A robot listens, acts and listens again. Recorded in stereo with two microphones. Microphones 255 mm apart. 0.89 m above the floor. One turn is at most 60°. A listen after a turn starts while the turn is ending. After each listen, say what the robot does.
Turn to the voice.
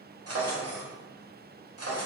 Keep listening.
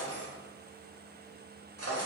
Keep listening.
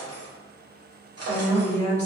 Turn 30° left.
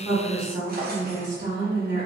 Turn 35° right.
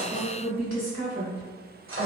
Turn 20° right.
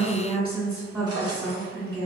Turn 10° right.
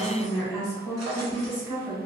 Facing the woman speaking.